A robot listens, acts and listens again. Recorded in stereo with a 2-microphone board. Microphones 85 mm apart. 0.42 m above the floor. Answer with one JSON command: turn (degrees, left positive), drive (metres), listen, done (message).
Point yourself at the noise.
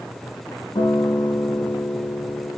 {"turn": 70}
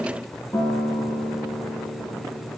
{"turn": 40}
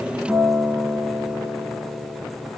{"done": "Facing the guitar."}